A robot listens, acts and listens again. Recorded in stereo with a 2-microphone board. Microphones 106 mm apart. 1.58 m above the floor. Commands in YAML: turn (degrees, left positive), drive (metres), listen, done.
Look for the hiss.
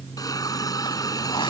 turn: 35
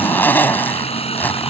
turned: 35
turn: 110
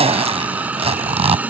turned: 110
turn: -15
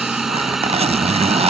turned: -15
done: "Facing the hiss."